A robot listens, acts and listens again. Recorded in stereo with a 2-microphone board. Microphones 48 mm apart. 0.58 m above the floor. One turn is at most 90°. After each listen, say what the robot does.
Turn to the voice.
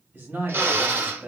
Turn 60° right.
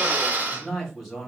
Facing the man speaking, 2 to 4 m away.